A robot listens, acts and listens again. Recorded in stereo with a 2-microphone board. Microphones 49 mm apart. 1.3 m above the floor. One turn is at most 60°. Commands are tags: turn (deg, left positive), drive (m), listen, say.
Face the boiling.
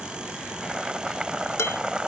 <turn deg="-30"/>
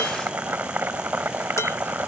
<turn deg="-60"/>
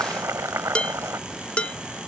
<turn deg="-60"/>
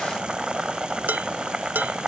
<turn deg="-20"/>
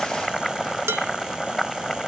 <say>Found it: boiling, straight ahead.</say>